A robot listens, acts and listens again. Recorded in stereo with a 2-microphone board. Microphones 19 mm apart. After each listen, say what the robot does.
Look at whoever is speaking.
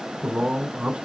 Turn 90° right.
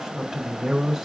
Found it: a man speaking, straight ahead, 2 to 4 m away.